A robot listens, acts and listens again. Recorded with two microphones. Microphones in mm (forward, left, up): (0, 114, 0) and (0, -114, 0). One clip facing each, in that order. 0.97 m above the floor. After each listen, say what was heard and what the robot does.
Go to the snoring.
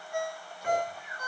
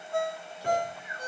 Turn 30° right.
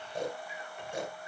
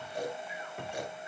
So it is at 25° left. Turn 25° left.
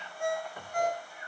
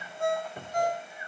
Drive 1.0 m forward.
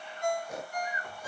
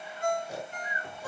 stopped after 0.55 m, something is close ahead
Something is in my way. I am facing the snoring but have not reached it.